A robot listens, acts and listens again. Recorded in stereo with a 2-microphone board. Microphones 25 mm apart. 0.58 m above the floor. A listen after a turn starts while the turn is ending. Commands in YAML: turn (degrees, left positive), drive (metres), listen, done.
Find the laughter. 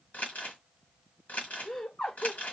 turn: 35
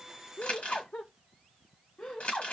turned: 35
turn: 40
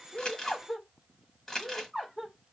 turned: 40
turn: -15
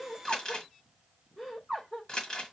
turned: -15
done: "Facing the laughter."